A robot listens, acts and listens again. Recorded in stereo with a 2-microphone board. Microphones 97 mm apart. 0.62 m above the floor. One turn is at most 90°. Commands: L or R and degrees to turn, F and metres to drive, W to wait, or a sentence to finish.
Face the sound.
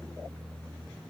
W
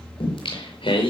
L70
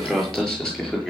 Found it: singing, straight ahead, over 4 m away.